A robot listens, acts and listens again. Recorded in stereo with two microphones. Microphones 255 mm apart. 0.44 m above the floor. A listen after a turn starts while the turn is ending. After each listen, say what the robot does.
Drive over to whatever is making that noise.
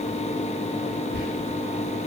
Turn 45° right.
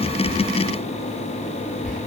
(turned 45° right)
Turn 85° right.
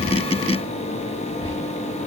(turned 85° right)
Keep listening.
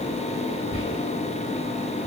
Turn 10° right.
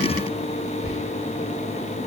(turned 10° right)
Drive 1.0 m forward.
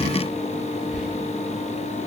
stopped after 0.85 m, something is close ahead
Keep listening.
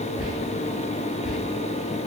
Arrived at the whispering, straight ahead.